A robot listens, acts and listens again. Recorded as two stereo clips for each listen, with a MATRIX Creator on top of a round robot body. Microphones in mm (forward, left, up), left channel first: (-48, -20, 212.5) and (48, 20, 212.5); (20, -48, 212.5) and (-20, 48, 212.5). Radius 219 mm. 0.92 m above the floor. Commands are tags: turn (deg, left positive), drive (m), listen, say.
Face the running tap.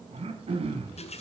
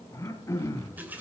<turn deg="-175"/>
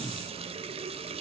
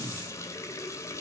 <say>Found it: a running tap, straight ahead.</say>